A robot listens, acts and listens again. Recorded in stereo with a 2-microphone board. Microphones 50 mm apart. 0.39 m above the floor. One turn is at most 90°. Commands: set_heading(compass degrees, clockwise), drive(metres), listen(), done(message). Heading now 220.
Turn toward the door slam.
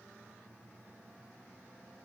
listen()
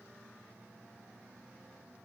listen()
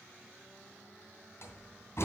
set_heading(160)
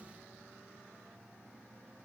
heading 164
listen()
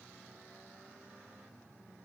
done("I heard a door slam, but can't make it out now. It was about 5° left or 65° left.")